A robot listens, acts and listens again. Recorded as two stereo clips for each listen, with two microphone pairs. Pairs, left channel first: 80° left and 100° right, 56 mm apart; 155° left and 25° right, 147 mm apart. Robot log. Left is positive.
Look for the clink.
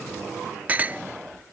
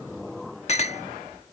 note: The clink: 165° right.
cmd yaw -165
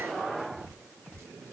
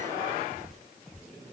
cmd idle
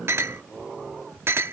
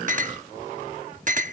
note: The clink is now 60° right.
cmd yaw -60
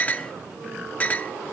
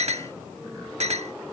note: The clink is now 20° left.
cmd yaw +20
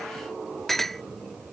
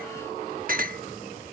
end: Found it: a clink, straight ahead.